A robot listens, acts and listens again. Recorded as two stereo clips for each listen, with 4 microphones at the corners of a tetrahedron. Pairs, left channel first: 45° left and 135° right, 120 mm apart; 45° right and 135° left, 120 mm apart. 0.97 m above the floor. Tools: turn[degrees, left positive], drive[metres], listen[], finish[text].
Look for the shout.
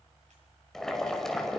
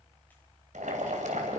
Action: listen[]
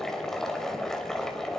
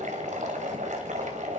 Action: listen[]
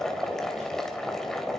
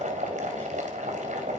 Action: finish[I can't make out a shout to turn to.]